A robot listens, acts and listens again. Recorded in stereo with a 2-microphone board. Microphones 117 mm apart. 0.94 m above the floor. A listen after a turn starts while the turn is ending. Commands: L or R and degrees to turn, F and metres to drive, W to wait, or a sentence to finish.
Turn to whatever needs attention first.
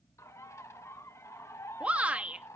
R30
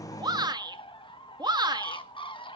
R140
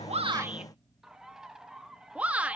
R10
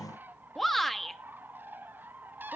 Facing the shout, 1 to 2 m away.